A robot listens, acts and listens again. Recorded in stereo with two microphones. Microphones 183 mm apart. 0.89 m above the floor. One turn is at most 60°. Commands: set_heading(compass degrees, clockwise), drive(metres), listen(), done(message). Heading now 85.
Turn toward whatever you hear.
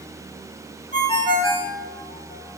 set_heading(55)
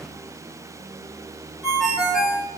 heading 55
done("Found it: a ringtone, straight ahead.")